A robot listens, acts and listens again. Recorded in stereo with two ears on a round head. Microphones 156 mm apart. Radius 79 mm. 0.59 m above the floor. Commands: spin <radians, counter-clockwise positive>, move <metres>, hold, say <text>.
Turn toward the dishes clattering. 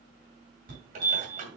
spin -0.70
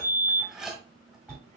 say Facing the dishes clattering.